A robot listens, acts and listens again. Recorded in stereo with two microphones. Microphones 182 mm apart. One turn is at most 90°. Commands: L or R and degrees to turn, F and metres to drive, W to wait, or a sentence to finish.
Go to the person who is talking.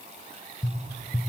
W
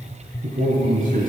R45
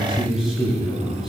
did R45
F1.0
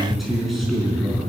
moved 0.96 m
F1.0
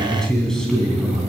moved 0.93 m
F1.0
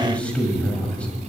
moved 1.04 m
L10
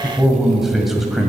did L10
F1.0
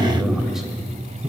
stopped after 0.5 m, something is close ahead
I am next to the man speaking.